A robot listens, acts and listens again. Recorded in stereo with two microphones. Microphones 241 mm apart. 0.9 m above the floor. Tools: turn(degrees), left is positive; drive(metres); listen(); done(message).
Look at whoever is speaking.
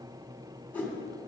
listen()
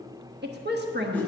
turn(degrees=-45)
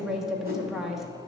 done("Facing the woman speaking, 1 to 2 m away.")